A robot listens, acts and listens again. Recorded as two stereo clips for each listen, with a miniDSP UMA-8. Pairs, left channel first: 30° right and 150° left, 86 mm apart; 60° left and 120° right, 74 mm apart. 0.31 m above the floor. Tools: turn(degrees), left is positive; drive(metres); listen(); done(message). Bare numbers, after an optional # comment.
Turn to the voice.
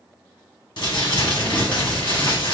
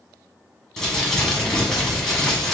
# The child speaking: 35° left.
turn(35)
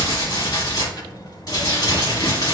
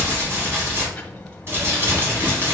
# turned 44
# The child speaking is now 10° right.
turn(-10)
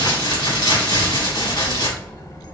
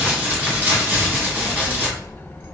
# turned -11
done("Facing the child speaking, under 1 m away.")